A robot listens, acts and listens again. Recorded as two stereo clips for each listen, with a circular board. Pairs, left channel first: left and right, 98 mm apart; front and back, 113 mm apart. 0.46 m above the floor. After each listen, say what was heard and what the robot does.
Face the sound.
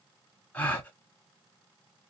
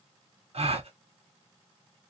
The gasp: 160° left. Turn 160° left.
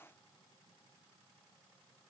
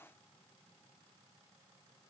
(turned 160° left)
I heard a gasp from this way, but can't make it out now.